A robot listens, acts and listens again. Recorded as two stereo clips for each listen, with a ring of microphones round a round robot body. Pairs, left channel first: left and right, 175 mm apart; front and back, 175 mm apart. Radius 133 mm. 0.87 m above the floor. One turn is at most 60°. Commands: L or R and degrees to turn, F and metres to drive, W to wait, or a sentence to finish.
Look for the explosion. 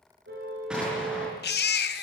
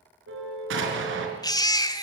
R60
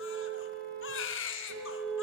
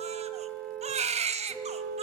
R60
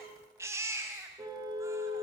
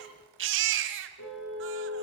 R55
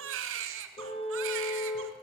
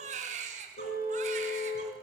Facing where the explosion came from. I can't hear it now.